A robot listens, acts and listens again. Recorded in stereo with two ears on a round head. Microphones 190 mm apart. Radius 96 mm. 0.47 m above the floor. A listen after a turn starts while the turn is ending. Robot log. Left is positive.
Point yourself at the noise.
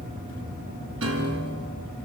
cmd yaw -90
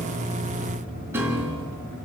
note: So it is at 10° right.
cmd yaw -10
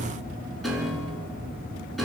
end: Found it: a piano, straight ahead.